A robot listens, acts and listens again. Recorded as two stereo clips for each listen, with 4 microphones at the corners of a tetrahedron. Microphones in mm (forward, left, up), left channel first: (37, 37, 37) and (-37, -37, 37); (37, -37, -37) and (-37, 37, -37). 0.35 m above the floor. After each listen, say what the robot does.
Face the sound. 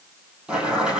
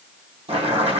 Turn 145° left.
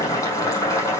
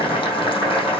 Turn 10° right.
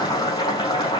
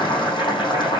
Facing the boiling, over 4 m away.